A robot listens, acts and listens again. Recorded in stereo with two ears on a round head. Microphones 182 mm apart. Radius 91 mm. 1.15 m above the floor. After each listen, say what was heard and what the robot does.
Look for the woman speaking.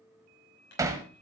Keep listening.
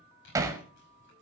Keep listening.
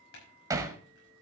I can't make out a woman speaking, only hammering and crumpling.